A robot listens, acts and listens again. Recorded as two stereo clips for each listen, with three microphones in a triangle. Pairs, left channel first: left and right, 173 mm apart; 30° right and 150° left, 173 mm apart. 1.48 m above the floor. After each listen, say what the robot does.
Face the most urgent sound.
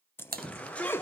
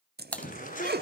Found it: a shout, straight ahead.